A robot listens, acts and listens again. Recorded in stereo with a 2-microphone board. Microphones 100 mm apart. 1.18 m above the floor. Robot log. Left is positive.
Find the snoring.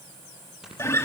cmd yaw -30
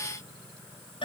cmd idle
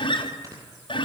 note: So it is at 145° right.
cmd yaw -145
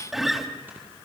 cmd idle
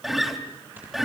note: The snoring is now 20° right.
cmd yaw -20
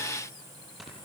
end: Found it: snoring, straight ahead.